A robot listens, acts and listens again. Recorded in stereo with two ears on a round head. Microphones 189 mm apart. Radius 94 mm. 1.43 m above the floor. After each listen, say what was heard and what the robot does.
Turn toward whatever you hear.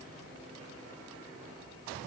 Keep listening.
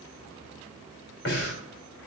The breathing: about 55° left or 125° left. Turn 55° left.
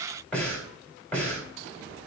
Facing the breathing.